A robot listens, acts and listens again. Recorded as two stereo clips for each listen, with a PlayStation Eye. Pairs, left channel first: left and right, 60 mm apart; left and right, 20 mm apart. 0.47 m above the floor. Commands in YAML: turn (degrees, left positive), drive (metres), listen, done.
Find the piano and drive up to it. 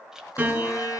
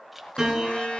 turn: -25
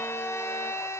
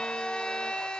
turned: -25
listen: true
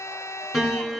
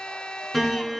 drive: 1.0
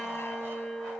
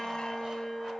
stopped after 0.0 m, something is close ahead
done: "Something is in my way. I am facing the piano but have not reached it."